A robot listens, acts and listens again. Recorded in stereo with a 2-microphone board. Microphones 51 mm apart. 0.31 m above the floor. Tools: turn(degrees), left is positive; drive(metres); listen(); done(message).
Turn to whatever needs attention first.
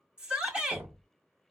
turn(degrees=-20)
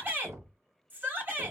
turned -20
turn(degrees=-135)
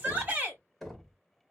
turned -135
turn(degrees=-35)
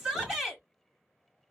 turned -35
done("Found it: a shout, straight ahead.")